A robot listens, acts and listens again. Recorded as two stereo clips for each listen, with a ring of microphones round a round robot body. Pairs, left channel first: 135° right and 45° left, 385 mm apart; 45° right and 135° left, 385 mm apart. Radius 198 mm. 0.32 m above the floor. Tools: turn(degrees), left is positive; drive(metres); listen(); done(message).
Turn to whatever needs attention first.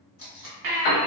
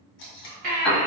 turn(degrees=70)
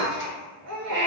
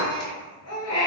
done("Facing the baby crying, under 1 m away.")